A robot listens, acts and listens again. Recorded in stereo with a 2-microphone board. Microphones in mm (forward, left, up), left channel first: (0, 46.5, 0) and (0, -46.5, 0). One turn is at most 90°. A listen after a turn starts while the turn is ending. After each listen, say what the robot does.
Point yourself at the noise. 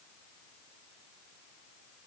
Keep listening.
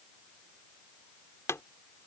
Turn 30° left.
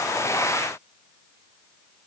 Keep listening.
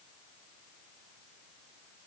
I heard a pop, but can't make it out now. It was about straight ahead or 120° left.